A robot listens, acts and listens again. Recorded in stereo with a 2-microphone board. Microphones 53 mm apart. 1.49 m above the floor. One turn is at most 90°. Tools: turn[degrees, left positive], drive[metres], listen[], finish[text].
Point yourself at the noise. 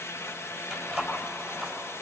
Action: turn[30]
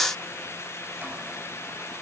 Action: listen[]
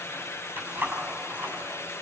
Thought: So it is at 30° right.
Action: turn[-30]
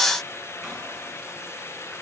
Action: listen[]
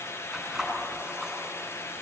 Action: finish[Facing the keys jangling.]